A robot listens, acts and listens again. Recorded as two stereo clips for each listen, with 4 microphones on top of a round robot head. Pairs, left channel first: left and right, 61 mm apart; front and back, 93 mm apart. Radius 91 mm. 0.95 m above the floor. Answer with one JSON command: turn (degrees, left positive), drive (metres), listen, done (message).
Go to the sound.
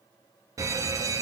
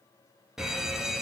{"turn": -95}
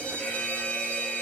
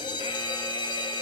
{"turn": 20}
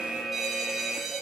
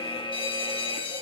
{"drive": 1.0}
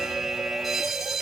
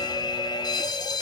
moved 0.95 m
{"drive": 1.0}
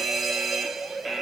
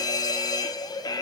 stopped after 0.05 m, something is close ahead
{"done": "Arrived at the fire alarm, straight ahead."}